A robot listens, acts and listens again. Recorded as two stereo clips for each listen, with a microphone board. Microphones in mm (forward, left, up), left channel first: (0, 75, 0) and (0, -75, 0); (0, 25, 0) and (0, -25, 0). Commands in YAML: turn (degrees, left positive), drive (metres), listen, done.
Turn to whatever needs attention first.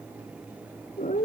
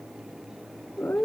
listen: true
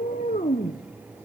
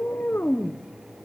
listen: true
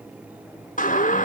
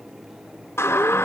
turn: 60
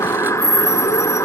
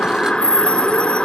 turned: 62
turn: 25
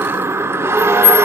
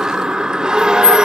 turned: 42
turn: -20
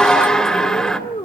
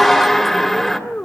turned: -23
done: "Facing the siren, 2 to 4 m away."